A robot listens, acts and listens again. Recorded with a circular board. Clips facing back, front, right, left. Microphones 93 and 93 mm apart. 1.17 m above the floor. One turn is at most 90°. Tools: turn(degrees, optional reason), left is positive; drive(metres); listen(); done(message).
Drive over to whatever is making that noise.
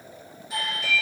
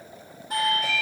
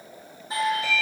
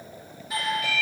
turn(degrees=-35, reason="The doorbell: 35° right.")
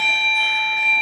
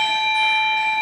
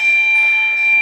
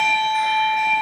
drive(metres=1.0)
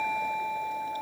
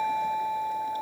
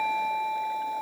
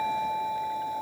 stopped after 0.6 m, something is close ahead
done("Something is in my way. I am facing the doorbell but have not reached it.")